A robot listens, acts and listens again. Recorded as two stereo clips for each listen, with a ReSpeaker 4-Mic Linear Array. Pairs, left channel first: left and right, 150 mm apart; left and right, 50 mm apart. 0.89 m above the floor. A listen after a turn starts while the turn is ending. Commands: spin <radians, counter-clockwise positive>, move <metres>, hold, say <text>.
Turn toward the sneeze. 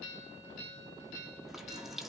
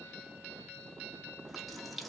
hold
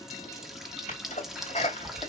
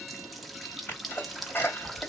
spin 0.87
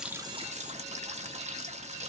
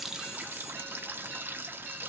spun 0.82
hold
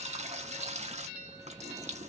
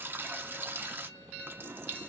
say I heard a sneeze, but can't make it out now. It was about 5° left or 80° left.